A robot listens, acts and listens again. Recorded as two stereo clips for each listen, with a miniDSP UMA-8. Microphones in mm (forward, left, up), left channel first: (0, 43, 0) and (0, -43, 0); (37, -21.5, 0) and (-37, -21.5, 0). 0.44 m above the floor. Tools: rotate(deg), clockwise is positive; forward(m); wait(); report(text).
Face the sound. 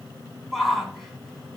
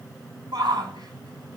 rotate(-175)
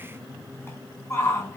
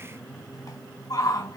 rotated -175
rotate(-25)
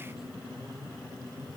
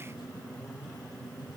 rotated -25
wait()
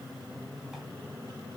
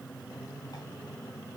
wait()
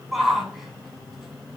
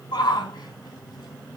rotate(10)
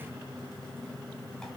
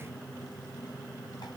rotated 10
wait()
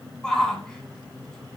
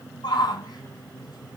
report("Facing the shout, 2 to 4 m away.")